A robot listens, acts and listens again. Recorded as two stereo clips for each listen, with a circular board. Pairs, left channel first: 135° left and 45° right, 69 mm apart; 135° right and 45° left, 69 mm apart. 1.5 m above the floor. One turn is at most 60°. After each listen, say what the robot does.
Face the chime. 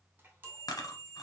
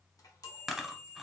Turn 60° right.
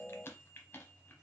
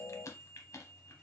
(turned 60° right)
Turn 50° right.
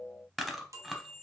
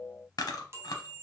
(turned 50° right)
Turn 10° right.
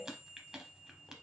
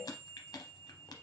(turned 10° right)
Found it: a chime, straight ahead, under 1 m away.